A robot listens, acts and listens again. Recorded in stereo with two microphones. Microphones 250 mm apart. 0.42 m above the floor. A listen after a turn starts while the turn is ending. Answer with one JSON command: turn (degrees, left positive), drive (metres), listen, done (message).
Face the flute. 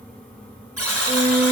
{"turn": -35}
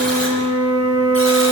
{"turn": -105}
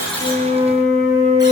{"done": "Found it: a flute, straight ahead, over 4 m away."}